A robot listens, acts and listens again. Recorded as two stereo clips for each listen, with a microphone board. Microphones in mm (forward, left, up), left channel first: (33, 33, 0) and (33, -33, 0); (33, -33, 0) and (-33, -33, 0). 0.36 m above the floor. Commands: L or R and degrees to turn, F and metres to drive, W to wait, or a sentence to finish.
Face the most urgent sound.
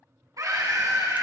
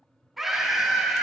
R95
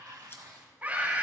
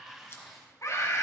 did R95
R25
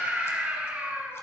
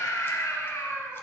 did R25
R25
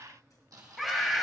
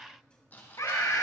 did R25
Facing the scream, 2 to 4 m away.